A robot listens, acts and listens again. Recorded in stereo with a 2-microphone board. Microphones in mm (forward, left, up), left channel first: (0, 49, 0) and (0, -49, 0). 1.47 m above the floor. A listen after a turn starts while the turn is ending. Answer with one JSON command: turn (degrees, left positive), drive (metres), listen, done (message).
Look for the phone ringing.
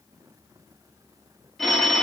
{"turn": 30}
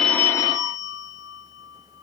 {"turn": 145}
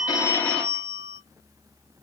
{"turn": 15}
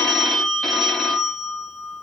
{"done": "Found it: a phone ringing, straight ahead."}